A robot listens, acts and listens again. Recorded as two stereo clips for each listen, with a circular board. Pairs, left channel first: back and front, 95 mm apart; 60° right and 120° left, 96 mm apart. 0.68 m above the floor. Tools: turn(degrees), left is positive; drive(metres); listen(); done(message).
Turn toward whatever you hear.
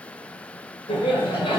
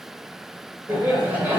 turn(degrees=-170)
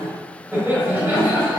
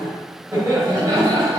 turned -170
turn(degrees=70)
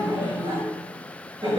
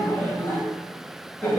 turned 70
done("Found it: laughter, straight ahead, 2 to 4 m away.")